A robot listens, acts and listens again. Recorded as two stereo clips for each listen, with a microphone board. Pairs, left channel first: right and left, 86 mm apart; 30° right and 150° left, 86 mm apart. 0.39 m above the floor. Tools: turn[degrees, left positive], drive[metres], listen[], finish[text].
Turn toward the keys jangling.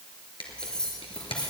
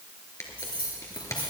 Thought: The keys jangling: 15° right.
Action: turn[-15]
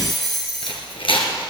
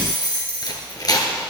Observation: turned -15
Action: finish[Facing the keys jangling.]